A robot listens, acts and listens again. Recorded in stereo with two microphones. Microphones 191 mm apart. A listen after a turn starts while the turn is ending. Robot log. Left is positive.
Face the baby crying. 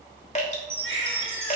cmd yaw +90
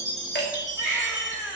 end: Found it: a baby crying, straight ahead, over 4 m away.